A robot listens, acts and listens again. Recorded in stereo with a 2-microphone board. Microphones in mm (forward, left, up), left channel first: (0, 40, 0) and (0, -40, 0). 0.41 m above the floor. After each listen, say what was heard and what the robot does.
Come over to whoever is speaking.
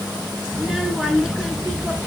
Turn 30° right.
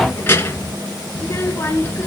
So it is at 30° left. Turn 30° left.
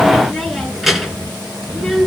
Drive 1.0 m forward.
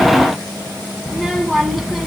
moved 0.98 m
Drive 1.0 m forward.
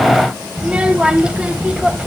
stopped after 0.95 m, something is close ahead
The child speaking is now 15° right. Turn 15° right.
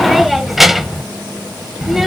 Arrived at the child speaking, straight ahead.